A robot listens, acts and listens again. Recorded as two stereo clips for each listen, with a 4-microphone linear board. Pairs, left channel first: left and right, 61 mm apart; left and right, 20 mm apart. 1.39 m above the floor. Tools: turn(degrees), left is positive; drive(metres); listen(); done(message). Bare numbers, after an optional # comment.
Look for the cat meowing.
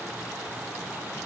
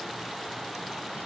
listen()
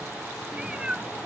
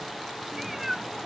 turn(-30)
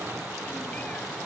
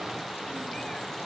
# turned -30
listen()
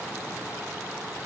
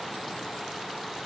listen()
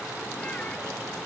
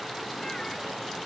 done("I heard a cat meowing, but can't make it out now. It was about 15° left or 135° right.")